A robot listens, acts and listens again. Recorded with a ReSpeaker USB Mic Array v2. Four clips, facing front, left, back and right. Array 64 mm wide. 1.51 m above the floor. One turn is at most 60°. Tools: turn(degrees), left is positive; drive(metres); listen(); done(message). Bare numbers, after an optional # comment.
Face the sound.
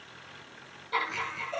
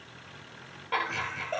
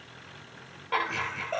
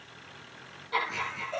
# The laughter: 140° left.
turn(60)
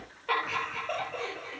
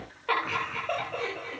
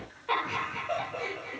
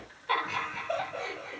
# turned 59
# The laughter is now 80° left.
turn(60)
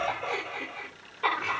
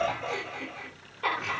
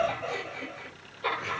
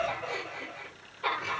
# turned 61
# The laughter is now 25° left.
turn(25)
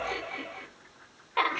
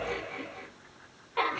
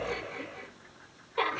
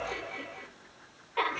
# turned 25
done("Found it: laughter, straight ahead, over 4 m away.")